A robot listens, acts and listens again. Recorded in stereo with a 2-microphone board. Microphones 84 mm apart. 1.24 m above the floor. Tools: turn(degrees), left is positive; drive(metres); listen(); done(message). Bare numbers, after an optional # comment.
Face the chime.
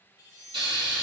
# The chime: about 45° left or 135° left.
turn(45)
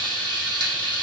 listen()
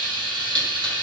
listen()
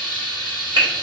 done("I heard a chime, but can't make it out now. It was about straight ahead or 90° left.")